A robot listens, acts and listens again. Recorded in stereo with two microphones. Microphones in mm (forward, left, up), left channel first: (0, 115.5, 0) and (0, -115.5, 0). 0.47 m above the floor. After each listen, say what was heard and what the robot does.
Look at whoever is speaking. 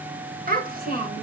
The child speaking: about 40° right or 140° right. Turn 40° right.
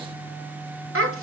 So it is at 95° right. Turn 95° right.
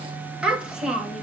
Facing the child speaking, 2 to 4 m away.